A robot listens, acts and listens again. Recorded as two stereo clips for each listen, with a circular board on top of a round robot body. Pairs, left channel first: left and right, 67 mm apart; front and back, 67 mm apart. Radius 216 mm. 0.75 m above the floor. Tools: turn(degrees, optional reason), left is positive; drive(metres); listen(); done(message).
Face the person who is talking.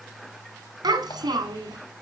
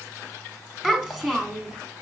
turn(degrees=-95, reason="The child speaking: 95° right.")
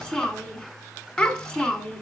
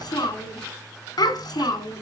done("Facing the child speaking.")